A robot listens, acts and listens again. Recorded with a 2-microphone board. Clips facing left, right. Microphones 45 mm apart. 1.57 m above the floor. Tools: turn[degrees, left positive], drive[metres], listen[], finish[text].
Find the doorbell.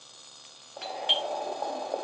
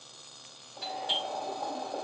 Thought: The doorbell: about 65° left or 115° left.
Action: turn[65]
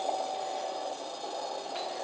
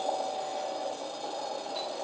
Thought: So it is at 45° left.
Action: turn[45]
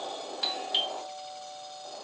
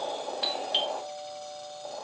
Thought: The doorbell is now 10° right.
Action: turn[-10]
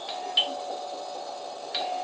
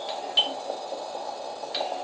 Action: finish[Found it: a doorbell, straight ahead.]